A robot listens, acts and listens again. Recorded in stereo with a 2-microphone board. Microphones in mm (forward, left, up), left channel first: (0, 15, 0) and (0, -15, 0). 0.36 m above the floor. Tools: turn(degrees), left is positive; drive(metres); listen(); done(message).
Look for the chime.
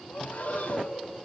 listen()
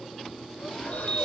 turn(degrees=45)
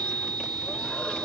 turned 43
turn(degrees=85)
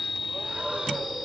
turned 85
done("Facing the chime.")